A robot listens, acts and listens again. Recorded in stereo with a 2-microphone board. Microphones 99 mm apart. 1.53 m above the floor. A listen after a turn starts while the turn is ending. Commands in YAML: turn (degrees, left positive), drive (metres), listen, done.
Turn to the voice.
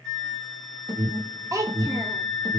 turn: -30
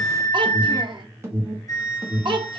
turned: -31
turn: -115
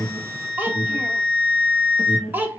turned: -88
turn: -20
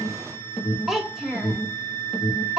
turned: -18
done: "Facing the child speaking, under 1 m away."